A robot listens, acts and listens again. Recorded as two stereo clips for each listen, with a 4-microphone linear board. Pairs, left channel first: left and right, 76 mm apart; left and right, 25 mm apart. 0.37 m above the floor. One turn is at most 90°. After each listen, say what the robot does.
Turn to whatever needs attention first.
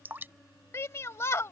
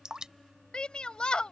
Turn 40° left.
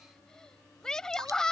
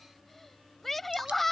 Turn 10° left.
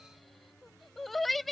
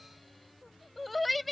Found it: a shout, straight ahead.